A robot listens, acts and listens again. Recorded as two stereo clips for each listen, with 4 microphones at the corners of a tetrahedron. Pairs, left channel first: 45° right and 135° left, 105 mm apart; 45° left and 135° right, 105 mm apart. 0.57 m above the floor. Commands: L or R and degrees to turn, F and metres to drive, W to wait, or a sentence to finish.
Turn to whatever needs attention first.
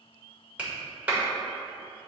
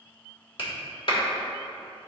W
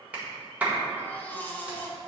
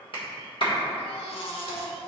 L25
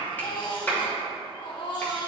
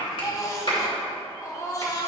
R10
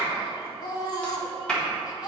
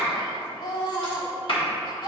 Facing the baby crying, 1 to 2 m away.